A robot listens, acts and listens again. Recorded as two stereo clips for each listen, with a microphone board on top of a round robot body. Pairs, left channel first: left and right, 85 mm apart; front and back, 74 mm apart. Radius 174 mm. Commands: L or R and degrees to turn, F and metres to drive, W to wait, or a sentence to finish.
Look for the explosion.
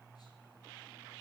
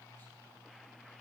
W
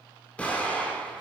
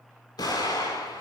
L15
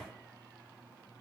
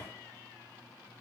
I heard an explosion from this way, but can't make it out now.